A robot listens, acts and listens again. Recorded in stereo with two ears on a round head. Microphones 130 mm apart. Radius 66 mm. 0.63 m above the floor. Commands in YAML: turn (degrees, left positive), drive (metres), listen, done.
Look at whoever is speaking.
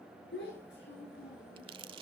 turn: 90
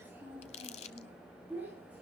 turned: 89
turn: -10
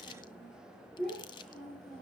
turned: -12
done: "Found it: a child speaking, straight ahead."